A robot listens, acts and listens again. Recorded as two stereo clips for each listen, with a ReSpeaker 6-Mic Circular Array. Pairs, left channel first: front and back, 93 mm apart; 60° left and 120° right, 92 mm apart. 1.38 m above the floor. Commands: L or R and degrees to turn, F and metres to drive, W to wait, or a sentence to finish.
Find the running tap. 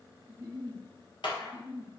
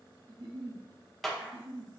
W
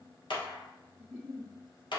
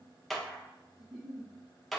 W
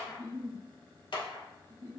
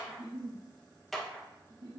I can't make out a running tap to turn to.